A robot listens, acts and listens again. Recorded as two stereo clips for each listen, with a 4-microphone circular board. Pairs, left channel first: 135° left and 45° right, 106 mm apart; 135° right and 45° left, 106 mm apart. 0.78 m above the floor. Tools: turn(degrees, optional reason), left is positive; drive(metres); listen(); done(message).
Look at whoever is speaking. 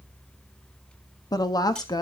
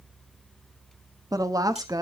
turn(degrees=90, reason="The woman speaking: 90° left.")
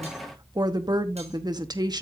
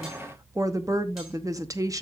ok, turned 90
done("Facing the woman speaking, under 1 m away.")